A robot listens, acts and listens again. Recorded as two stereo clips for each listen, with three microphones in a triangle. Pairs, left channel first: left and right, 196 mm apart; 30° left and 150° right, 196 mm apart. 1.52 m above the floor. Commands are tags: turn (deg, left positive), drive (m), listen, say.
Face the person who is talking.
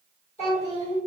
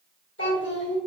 <turn deg="35"/>
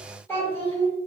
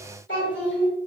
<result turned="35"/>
<turn deg="15"/>
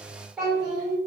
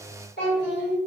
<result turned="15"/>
<say>Found it: a child speaking, straight ahead, 1 to 2 m away.</say>